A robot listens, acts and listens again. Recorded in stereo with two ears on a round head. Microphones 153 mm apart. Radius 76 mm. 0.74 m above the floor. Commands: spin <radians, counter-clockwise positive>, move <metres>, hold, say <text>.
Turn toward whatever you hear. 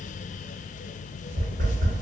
spin -0.87
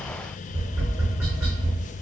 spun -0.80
spin -0.26
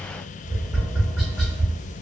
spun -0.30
say Facing the tapping.